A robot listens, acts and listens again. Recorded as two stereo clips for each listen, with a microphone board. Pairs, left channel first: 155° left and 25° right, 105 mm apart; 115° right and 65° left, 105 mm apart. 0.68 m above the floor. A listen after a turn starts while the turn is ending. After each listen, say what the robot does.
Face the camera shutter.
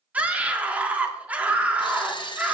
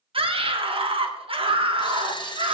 Turn 160° right.
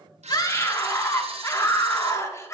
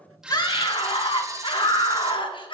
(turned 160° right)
Found it: a camera shutter, straight ahead.